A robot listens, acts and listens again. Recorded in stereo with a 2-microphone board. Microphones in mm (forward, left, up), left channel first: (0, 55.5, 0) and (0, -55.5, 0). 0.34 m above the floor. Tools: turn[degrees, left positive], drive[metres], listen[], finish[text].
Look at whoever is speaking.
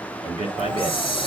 Action: turn[-90]
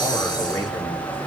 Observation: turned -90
Action: listen[]
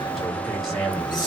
Action: finish[Found it: a man speaking, straight ahead.]